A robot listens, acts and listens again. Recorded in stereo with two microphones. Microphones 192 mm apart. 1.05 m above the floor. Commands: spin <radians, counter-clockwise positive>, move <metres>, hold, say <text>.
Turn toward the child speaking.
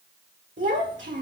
spin -1.22
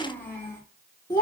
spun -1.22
spin 0.44
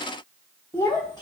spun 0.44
spin 0.35
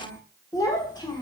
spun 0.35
spin 0.52
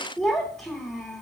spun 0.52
say Found it: a child speaking, straight ahead, 1 to 2 m away.